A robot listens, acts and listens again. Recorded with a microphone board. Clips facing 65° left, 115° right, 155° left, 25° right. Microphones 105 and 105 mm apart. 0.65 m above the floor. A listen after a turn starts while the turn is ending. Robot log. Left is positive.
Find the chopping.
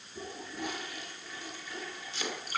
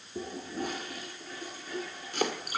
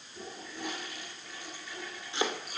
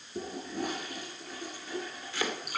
note: The chopping: 140° right.
cmd yaw -140
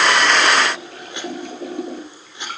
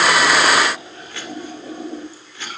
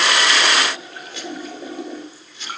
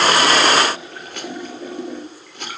end: Found it: chopping, straight ahead, 2 to 4 m away.